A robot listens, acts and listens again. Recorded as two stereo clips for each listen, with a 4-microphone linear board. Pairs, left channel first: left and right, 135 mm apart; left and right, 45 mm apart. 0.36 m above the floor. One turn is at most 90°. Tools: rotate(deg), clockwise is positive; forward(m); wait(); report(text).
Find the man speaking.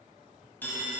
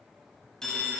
wait()
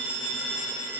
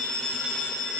wait()
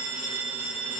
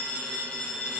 report("I can't make out a man speaking, only a phone ringing.")